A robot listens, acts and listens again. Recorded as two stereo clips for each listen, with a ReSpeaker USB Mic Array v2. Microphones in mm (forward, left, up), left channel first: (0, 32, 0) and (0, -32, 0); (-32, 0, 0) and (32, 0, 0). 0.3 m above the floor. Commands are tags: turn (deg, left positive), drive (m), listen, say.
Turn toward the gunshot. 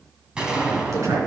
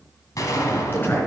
<turn deg="-165"/>
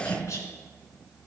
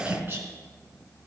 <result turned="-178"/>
<turn deg="15"/>
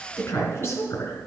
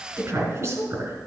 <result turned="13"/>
<say>Facing where the gunshot came from. I can't hear it now.</say>